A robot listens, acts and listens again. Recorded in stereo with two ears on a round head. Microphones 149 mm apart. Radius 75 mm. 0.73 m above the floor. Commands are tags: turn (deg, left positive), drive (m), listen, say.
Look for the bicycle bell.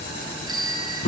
<turn deg="-25"/>
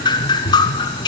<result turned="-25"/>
<listen/>
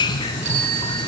<turn deg="-130"/>
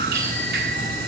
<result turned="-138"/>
<turn deg="10"/>
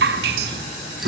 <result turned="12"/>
<listen/>
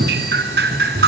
<say>Facing where the bicycle bell came from. I can't hear it now.</say>